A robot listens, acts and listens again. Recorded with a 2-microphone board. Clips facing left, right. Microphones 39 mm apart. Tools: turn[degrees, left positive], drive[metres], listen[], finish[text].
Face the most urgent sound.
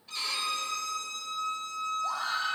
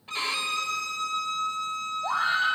Thought: The scream: about 40° right or 140° right.
Action: turn[-40]
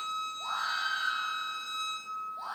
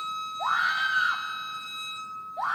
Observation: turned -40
Thought: So it is at 100° right.
Action: turn[-100]
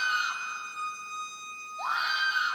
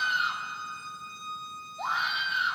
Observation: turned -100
Action: finish[Facing the scream, 1 to 2 m away.]